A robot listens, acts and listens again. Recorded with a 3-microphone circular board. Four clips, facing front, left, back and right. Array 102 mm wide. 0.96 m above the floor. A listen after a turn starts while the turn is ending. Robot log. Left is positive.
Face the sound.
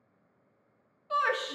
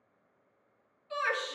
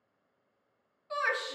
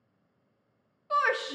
note: The shout: 70° right.
cmd yaw -70
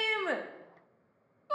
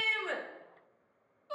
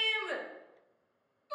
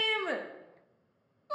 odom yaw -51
note: The shout is now 15° right.
cmd yaw -15
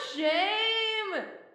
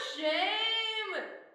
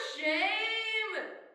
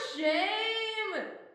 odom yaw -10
end: Facing the shout.